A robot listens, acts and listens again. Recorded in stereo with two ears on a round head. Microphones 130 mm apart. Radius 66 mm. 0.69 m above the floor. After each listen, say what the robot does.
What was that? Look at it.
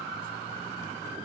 Keep listening.
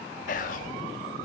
Turn 60° left.
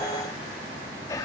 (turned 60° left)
Turn 25° left.
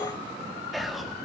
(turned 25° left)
Found it: whispering, straight ahead, under 1 m away.